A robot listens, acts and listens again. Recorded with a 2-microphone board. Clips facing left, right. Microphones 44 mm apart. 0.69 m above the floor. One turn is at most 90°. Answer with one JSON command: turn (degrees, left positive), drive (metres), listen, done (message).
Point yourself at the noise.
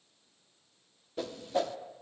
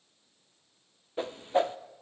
{"turn": -30}
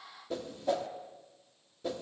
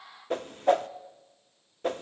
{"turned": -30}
{"turn": -90}
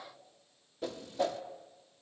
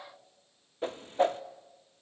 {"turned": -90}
{"turn": -40}
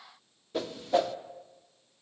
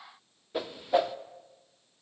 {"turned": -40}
{"turn": -15}
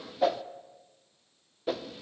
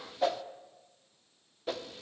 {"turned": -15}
{"done": "Found it: a whoosh, straight ahead."}